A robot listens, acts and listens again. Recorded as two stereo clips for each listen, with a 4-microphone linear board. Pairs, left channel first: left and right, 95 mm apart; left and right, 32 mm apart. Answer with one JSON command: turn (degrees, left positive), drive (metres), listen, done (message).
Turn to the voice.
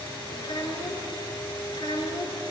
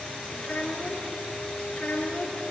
{"turn": 60}
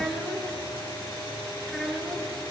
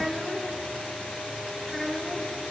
{"done": "Facing the child speaking, 2 to 4 m away."}